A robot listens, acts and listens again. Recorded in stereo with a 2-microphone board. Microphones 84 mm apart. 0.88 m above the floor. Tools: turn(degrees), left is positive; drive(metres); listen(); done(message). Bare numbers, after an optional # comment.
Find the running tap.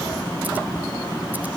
listen()
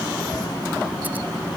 listen()
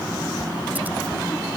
done("I can't make out a running tap.")